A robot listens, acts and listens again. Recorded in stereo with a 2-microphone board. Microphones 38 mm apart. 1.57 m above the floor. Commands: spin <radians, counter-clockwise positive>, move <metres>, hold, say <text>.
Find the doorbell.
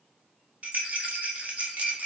hold
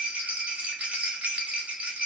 hold
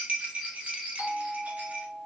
spin -0.87
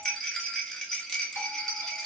hold
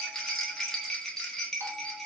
hold
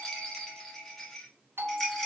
spin -1.40
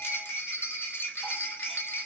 hold
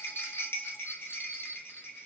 hold
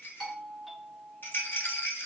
say Facing the doorbell, under 1 m away.